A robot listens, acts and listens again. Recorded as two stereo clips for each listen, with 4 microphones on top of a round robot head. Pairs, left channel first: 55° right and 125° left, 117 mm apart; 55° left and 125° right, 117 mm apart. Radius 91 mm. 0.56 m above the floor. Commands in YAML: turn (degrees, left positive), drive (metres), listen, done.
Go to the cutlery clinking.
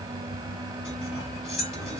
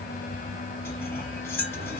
turn: -15
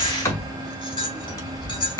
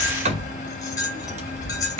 drive: 1.0
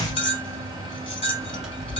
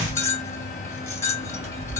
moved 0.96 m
turn: -15
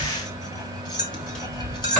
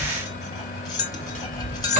drive: 1.0
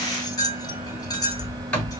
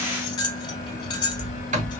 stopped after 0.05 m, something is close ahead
done: "I am next to the cutlery clinking."